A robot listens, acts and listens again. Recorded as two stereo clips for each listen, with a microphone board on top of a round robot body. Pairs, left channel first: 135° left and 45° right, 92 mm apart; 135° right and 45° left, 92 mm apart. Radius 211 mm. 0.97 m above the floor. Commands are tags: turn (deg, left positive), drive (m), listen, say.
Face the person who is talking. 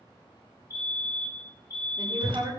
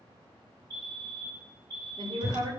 <say>Found it: a woman speaking, straight ahead, 2 to 4 m away.</say>